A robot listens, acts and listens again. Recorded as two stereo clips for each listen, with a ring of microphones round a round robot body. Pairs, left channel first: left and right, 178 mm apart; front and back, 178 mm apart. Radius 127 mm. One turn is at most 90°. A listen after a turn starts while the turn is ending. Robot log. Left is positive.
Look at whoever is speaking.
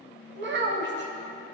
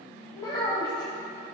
note: The child speaking: 75° right.
cmd yaw -75
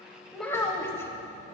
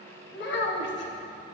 note: The child speaking is now 15° left.
cmd yaw +15
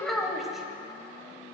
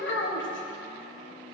end: Facing the child speaking, 1 to 2 m away.